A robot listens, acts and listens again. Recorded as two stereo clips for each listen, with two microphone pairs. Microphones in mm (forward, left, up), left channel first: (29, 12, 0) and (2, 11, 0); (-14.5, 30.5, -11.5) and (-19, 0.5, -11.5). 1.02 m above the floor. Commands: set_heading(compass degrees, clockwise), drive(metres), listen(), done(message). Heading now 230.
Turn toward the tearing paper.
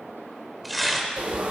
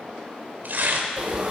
set_heading(315)
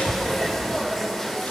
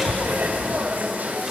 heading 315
listen()
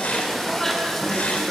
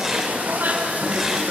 listen()
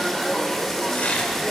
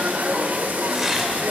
set_heading(330)
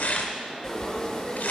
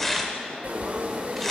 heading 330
done("Found it: tearing paper, straight ahead, 2 to 4 m away.")